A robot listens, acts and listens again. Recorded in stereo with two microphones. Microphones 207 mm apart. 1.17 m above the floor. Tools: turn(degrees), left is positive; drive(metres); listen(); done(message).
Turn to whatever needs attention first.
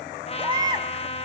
turn(degrees=-20)
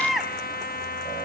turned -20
done("Facing the baby crying, 1 to 2 m away.")